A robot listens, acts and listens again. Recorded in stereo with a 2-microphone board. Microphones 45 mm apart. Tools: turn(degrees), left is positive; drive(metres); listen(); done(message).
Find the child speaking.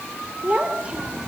turn(degrees=-25)
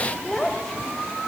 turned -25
turn(degrees=10)
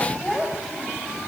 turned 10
done("Facing the child speaking, 2 to 4 m away.")